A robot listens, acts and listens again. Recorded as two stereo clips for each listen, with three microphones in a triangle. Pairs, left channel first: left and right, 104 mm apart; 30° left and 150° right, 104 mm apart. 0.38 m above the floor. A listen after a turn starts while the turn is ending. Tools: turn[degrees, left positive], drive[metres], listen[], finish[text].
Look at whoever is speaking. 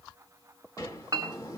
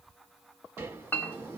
Action: listen[]
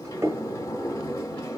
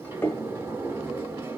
Action: listen[]
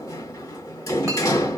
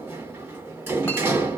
Action: finish[I can't make out anyone speaking, only a sliding door and a clink.]